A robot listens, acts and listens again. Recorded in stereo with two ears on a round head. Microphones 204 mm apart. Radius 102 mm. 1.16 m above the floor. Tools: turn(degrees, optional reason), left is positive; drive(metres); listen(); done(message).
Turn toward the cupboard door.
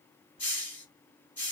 listen()
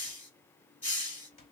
turn(degrees=25, reason="The cupboard door: about 25° left or 155° left.")
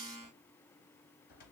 turn(degrees=130, reason="So it is at 130° left.")
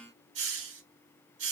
listen()
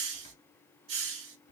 turn(degrees=25, reason="The cupboard door is now 25° left.")
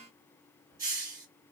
listen()
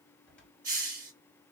done("Facing the cupboard door.")